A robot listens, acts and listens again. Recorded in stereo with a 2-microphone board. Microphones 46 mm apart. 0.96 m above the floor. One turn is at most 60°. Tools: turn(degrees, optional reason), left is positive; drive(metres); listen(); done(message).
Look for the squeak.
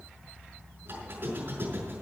turn(degrees=-60, reason="The squeak: about 60° right or 120° right.")
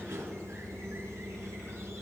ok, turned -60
turn(degrees=-60, reason="So it is at 60° right.")
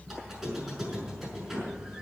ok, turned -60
done("Found it: a squeak, straight ahead.")